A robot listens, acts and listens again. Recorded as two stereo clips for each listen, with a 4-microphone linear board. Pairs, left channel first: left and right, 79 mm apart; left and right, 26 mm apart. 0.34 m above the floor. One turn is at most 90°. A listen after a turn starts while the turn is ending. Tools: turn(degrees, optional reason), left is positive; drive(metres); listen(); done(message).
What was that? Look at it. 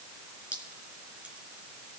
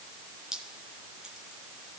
turn(degrees=-15, reason="The dripping: about 15° right or 165° right.")
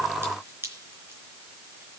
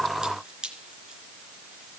turn(degrees=-90, reason="So it is at 150° right.")
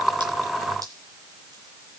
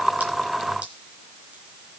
turn(degrees=-60, reason="Nothing new. It was at 60° right.")
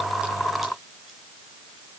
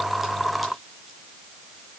listen()
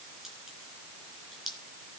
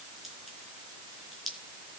done("Found it: dripping, straight ahead.")